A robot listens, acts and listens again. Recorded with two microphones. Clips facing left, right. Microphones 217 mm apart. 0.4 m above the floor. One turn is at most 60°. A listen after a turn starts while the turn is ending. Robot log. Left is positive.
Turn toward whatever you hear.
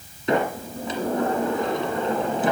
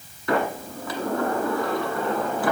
note: The sliding door: about 20° left or 160° left.
cmd yaw +20
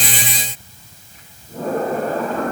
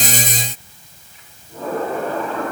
note: So it is at 135° left.
cmd yaw +60
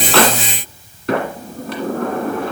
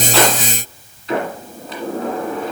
note: The sliding door is now 70° left.
cmd yaw +60
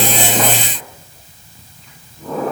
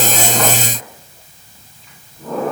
end: Facing the sliding door, 1 to 2 m away.